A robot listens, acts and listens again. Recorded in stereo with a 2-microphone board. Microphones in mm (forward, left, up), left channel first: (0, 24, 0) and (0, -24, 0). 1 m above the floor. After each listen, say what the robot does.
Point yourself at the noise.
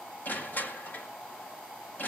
Turn 45° left.
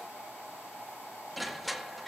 Facing the crushing, 1 to 2 m away.